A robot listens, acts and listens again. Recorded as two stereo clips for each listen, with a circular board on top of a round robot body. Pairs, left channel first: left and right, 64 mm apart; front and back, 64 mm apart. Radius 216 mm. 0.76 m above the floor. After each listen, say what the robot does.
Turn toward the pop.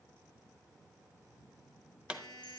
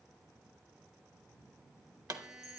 Turn 160° right.
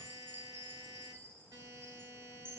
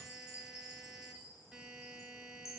I heard a pop from this way, but can't make it out now.